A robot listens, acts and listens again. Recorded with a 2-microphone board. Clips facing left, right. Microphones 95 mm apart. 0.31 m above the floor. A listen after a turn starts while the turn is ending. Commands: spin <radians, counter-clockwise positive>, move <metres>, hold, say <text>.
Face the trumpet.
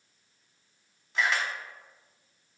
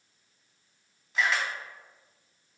hold
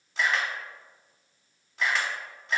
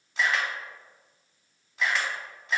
hold
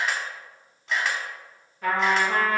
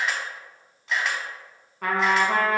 spin -1.57
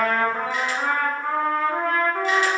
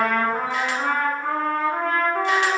say Facing the trumpet, 1 to 2 m away.